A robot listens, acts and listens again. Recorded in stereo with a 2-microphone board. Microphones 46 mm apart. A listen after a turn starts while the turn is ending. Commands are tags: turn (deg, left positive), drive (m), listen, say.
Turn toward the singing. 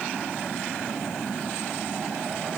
<listen/>
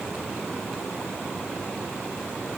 <listen/>
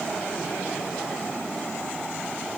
<say>I can't make out singing.</say>